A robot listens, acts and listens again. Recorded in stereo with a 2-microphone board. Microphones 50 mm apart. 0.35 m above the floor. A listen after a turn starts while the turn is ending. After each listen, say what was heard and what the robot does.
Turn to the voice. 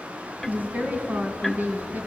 The woman speaking: about 30° right or 150° right. Turn 30° right.
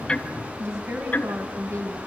So it is at 120° right. Turn 120° right.
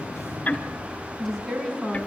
Found it: a woman speaking, straight ahead.